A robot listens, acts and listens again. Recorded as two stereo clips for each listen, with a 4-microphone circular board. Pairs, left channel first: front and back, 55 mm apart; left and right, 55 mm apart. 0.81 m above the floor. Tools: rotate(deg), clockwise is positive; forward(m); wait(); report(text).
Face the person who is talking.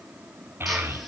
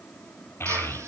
rotate(-135)
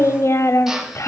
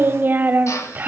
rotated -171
rotate(35)
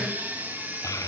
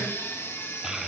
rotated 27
rotate(10)
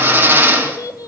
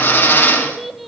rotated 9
report("Found it: a child speaking, straight ahead.")